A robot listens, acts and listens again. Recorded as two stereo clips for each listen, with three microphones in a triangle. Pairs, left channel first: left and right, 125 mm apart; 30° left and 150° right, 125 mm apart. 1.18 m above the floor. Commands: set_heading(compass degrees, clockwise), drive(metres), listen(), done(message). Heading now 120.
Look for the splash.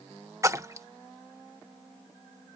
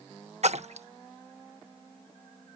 set_heading(275)
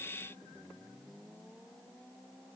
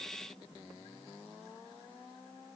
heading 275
done("I heard a splash from this way, but can't make it out now.")